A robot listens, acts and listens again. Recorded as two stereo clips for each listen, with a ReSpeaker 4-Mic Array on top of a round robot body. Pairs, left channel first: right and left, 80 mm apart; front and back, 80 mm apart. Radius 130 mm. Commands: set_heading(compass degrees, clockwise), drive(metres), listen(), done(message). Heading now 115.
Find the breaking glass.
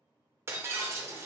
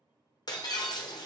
set_heading(80)
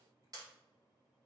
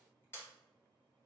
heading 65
set_heading(80)
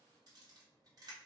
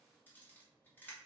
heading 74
done("Facing where the breaking glass came from. I can't hear it now.")